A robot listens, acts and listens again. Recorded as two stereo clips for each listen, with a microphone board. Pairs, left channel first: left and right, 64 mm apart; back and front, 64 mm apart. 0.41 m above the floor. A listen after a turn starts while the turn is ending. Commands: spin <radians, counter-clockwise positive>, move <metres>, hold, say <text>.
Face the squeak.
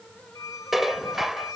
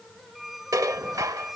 spin 1.57
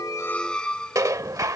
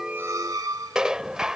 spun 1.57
spin 0.26
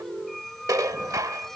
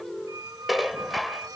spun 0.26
say Found it: a squeak, straight ahead.